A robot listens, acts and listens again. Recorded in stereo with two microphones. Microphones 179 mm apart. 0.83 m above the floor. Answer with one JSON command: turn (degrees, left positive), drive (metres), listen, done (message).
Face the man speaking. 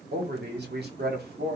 {"turn": -60}
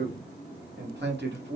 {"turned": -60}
{"turn": -75}
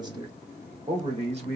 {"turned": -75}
{"turn": -40}
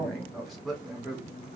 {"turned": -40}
{"done": "Found it: a man speaking, straight ahead."}